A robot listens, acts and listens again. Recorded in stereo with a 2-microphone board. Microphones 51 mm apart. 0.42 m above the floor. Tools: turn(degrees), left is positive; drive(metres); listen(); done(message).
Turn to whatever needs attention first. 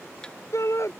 turn(degrees=70)
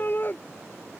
turn(degrees=40)
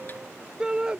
turn(degrees=-15)
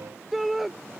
done("Facing the shout.")